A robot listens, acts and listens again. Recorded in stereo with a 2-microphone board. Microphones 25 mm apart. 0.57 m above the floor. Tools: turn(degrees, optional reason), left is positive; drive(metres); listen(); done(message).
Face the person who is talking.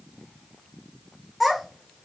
turn(degrees=-30)
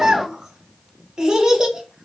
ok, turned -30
turn(degrees=-145, reason="So it is at 145° right.")
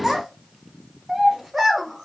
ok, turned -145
turn(degrees=-15, reason="The child speaking is now 15° right.")
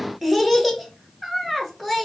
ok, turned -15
done("Found it: a child speaking, straight ahead.")